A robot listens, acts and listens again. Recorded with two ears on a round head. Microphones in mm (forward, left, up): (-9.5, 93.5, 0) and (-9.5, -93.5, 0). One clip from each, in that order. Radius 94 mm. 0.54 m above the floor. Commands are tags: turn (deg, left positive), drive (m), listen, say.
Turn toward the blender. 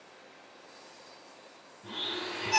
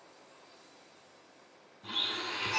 <turn deg="-55"/>
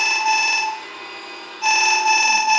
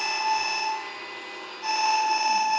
<say>Found it: a blender, straight ahead, 1 to 2 m away.</say>